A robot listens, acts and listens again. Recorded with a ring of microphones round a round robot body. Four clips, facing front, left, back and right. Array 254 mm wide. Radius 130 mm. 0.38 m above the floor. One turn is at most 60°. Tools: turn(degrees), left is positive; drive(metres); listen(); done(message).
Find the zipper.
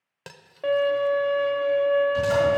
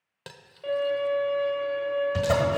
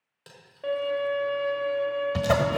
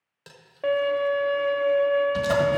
turn(degrees=60)
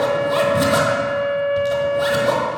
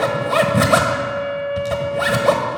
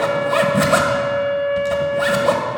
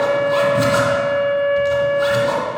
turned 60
turn(degrees=60)
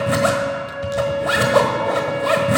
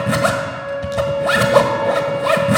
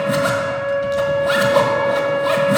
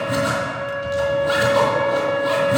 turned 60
turn(degrees=60)
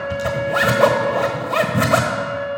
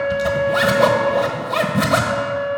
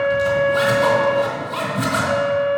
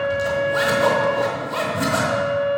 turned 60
turn(degrees=30)
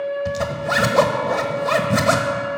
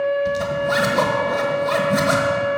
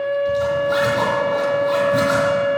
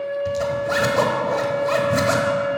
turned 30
done("Found it: a zipper, straight ahead.")